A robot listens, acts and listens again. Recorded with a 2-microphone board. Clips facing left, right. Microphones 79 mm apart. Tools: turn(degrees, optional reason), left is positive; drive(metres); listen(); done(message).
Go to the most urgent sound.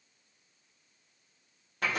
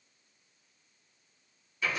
listen()
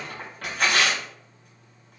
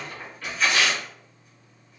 listen()
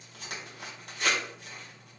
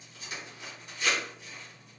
done("I can't make out anything urgent to turn to.")